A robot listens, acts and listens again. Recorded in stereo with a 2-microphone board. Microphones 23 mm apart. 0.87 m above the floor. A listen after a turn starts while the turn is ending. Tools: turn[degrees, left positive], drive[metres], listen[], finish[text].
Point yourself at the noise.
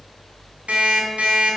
Action: turn[-90]
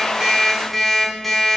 Action: finish[Facing the alarm clock.]